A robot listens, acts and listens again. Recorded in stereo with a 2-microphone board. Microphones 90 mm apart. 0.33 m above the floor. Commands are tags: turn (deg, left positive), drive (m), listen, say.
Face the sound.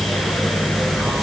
<listen/>
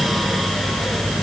<listen/>
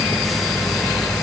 <say>I can't make out anything to turn to.</say>